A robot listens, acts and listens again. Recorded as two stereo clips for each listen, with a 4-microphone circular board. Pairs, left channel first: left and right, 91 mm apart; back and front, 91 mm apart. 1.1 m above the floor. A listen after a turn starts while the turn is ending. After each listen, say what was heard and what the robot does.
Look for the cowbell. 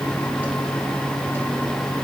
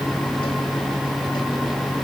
Keep listening.
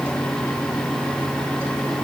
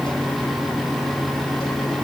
Keep listening.
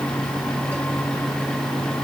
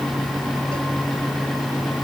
I can't make out a cowbell.